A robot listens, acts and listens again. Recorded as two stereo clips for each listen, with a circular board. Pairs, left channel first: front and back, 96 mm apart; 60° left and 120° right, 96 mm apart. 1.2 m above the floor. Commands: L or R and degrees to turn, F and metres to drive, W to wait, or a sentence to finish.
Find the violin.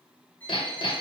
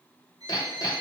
R70
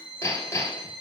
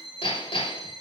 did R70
R30
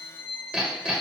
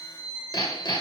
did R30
Found it: a violin, straight ahead, 2 to 4 m away.